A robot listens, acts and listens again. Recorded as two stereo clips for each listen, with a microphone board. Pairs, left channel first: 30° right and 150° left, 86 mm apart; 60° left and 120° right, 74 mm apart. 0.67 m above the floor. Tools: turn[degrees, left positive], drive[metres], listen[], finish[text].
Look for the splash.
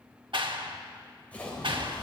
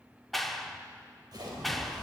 Thought: The splash: 105° right.
Action: turn[-105]
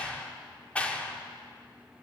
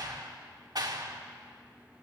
Action: finish[Facing where the splash came from. I can't hear it now.]